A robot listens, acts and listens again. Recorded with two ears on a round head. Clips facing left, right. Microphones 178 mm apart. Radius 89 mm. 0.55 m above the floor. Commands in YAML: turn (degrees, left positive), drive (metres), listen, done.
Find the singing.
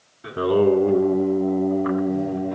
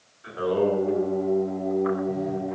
turn: 45
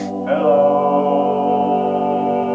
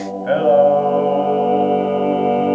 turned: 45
turn: -45
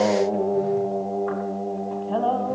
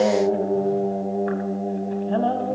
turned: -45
turn: -25
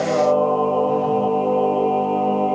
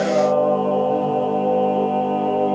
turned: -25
turn: -15
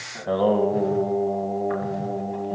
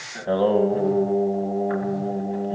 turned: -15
done: "Found it: singing, straight ahead."